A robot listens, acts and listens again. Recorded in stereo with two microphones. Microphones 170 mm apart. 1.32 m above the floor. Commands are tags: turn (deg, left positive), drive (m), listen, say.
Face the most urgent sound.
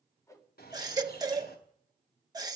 <turn deg="-20"/>
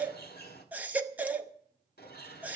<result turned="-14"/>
<turn deg="-10"/>
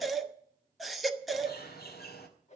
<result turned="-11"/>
<say>Facing the baby crying, under 1 m away.</say>